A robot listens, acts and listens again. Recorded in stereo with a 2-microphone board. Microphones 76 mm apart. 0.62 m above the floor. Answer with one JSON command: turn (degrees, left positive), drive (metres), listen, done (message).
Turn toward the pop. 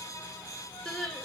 {"listen": true}
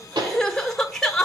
{"turn": -90}
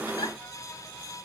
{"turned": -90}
{"done": "Facing where the pop came from. I can't hear it now."}